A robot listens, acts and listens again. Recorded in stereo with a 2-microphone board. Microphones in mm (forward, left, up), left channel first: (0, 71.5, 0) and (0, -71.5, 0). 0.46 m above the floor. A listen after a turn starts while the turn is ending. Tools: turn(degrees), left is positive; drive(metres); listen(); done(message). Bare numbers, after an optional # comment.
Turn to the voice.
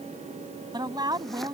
# The woman speaking: about 30° right or 150° right.
turn(-30)
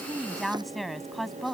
done("Facing the woman speaking.")